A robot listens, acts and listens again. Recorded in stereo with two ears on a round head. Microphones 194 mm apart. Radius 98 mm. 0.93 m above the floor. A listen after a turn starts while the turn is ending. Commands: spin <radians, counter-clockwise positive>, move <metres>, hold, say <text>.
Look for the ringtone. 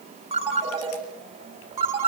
spin -0.52
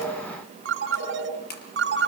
spin -2.18
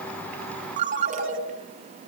spin -0.61
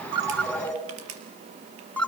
say Found it: a ringtone, straight ahead, over 4 m away.